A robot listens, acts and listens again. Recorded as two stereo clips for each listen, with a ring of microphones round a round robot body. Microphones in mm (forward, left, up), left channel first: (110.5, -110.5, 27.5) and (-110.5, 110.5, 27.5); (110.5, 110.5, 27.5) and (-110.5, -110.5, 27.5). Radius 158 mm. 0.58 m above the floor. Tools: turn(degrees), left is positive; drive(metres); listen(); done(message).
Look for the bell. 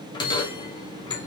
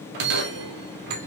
turn(degrees=-120)
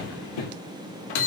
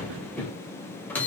turn(degrees=-40)
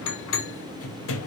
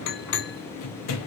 done("Facing the bell.")